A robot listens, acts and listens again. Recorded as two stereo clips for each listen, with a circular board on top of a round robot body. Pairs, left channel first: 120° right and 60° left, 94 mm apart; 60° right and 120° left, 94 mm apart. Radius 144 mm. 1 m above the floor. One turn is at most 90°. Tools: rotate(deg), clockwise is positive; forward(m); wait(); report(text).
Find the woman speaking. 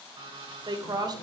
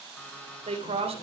rotate(-90)
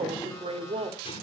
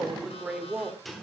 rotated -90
rotate(-40)
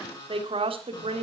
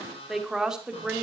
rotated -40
rotate(-40)
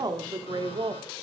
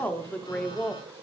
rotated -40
rotate(-20)
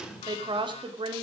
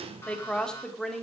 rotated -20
rotate(-25)
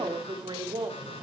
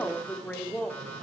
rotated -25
rotate(-20)
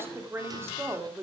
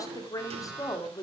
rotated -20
report("Found it: a woman speaking, straight ahead, 2 to 4 m away.")